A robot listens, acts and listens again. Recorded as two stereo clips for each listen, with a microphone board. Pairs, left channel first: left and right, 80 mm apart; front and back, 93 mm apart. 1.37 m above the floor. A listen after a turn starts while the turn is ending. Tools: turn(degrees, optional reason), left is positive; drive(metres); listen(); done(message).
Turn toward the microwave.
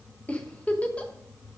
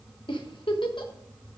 listen()
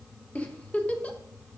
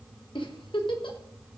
listen()
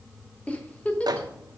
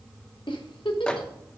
turn(degrees=-80, reason="The microwave: 80° right.")
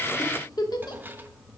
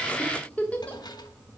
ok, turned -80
listen()
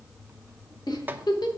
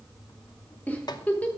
listen()
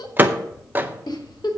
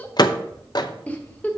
turn(degrees=-25, reason="The microwave is now 25° right.")
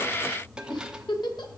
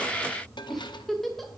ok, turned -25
listen()
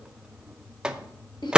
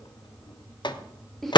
turn(degrees=-10, reason="The microwave is now 10° right.")
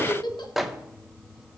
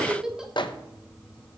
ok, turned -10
done("Facing the microwave.")